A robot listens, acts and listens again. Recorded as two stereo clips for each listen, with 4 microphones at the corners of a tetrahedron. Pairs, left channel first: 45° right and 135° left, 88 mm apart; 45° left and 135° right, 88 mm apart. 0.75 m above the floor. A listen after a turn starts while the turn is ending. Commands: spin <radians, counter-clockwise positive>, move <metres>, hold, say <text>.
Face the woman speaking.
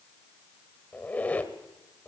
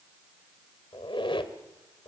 hold
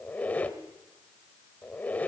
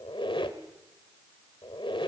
hold
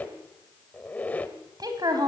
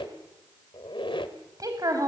spin 3.05
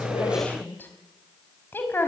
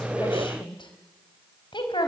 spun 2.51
spin 0.35
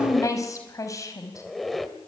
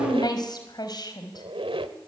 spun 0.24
say Facing the woman speaking.